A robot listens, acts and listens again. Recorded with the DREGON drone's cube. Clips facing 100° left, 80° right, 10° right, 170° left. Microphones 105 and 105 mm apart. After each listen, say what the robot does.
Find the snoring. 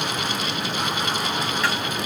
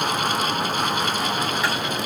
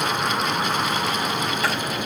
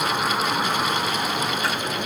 Keep listening.
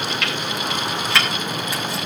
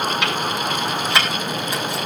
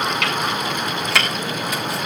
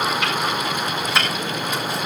Keep listening.
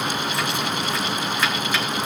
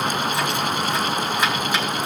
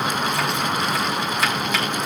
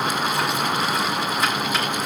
I can't make out snoring, only chopping.